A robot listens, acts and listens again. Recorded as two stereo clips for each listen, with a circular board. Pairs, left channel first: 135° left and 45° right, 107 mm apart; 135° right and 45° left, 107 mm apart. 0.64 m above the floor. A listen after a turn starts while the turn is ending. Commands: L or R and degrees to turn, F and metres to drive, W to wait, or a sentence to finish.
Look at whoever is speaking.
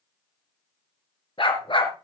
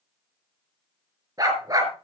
W
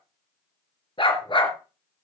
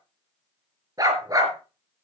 W
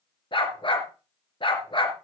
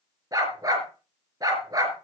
I can't make out anyone speaking, only a dog barking.